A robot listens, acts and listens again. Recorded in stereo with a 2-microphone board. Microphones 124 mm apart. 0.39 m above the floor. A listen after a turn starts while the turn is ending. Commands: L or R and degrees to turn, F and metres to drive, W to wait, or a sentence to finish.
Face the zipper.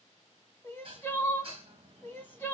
W
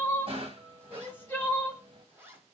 R20
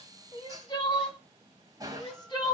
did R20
W
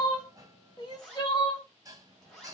Found it: a zipper, straight ahead.